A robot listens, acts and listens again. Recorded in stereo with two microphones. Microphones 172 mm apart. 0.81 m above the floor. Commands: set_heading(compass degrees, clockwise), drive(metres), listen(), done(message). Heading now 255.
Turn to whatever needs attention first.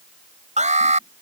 set_heading(300)
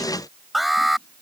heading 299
done("Facing the alarm.")